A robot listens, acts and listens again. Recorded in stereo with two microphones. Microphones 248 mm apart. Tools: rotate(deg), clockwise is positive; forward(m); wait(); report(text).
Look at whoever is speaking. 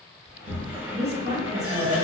rotate(25)
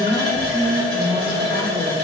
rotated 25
rotate(125)
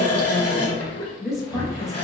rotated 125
report("Facing the woman speaking.")